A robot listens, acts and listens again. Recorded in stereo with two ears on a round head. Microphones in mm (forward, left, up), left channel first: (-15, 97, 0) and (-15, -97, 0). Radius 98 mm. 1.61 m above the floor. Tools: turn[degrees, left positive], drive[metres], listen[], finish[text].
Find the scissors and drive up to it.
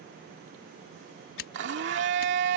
Thought: The scissors: about 65° left or 115° left.
Action: turn[65]
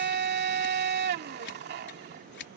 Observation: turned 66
Thought: So it is at 50° left.
Action: turn[50]
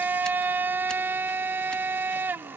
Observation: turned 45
Action: listen[]
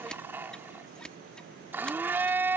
Action: drive[1.0]
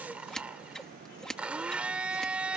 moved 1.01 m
Action: drive[1.0]
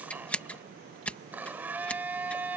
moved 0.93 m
Action: drive[1.0]
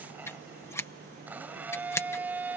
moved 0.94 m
Thought: The scissors is now 10° left.
Action: turn[10]
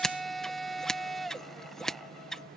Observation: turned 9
Action: drive[1.0]
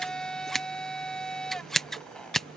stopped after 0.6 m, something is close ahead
Action: finish[Arrived at the scissors, straight ahead.]